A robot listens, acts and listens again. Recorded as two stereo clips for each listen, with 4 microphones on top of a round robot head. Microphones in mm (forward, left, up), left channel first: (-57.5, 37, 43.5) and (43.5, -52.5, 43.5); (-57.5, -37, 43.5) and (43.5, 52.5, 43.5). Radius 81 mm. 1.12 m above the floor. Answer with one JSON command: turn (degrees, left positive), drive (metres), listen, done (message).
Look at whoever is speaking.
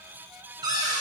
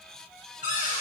{"listen": true}
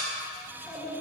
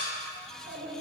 {"turn": 60}
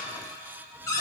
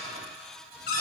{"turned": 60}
{"listen": true}
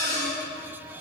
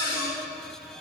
{"listen": true}
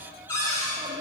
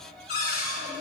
{"turn": 10}
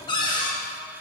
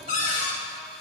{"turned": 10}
{"listen": true}
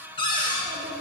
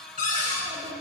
{"done": "Found it: a child speaking, straight ahead."}